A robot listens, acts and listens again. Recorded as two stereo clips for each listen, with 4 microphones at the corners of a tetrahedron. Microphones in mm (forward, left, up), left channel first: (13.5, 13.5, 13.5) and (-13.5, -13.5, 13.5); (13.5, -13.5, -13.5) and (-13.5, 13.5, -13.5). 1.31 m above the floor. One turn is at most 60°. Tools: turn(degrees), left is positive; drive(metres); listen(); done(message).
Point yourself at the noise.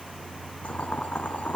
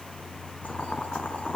done("Found it: boiling, straight ahead, 2 to 4 m away.")